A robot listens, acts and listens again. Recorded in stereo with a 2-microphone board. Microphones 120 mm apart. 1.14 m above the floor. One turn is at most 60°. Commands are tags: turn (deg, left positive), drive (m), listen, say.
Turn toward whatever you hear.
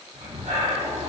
<turn deg="-60"/>
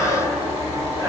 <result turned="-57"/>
<turn deg="-25"/>
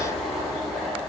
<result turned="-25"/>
<say>Found it: breathing, straight ahead, 2 to 4 m away.</say>